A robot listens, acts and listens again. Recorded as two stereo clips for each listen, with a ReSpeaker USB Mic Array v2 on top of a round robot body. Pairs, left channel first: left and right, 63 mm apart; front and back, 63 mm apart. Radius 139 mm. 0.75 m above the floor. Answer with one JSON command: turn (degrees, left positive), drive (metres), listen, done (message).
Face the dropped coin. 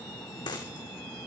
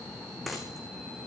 {"turn": 90}
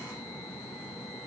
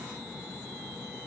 {"done": "Facing where the dropped coin came from. I can't hear it now."}